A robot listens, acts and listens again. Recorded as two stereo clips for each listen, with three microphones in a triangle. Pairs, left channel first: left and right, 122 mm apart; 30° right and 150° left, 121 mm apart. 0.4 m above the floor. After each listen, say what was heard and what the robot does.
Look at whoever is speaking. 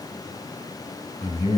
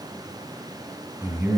The man speaking: 80° left. Turn 80° left.
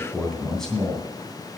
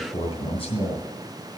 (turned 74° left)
Found it: a man speaking, straight ahead.